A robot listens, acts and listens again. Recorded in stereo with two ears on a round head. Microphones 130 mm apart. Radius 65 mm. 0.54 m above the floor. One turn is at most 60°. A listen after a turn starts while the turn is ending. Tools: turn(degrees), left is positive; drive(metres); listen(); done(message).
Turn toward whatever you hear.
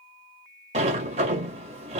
turn(degrees=-50)
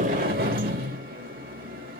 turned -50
turn(degrees=-60)
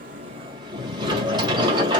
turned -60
turn(degrees=-35)
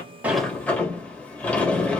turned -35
turn(degrees=10)
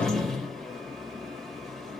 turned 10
done("Found it: a sliding door, straight ahead, 1 to 2 m away.")